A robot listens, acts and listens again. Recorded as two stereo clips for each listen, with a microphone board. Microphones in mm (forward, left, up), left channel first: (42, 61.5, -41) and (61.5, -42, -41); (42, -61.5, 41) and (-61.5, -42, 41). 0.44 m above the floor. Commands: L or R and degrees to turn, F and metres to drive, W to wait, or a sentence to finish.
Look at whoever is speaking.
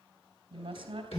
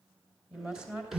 R110
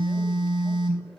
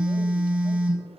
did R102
R10
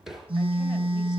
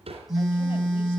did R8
W
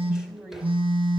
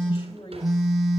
Facing the woman speaking.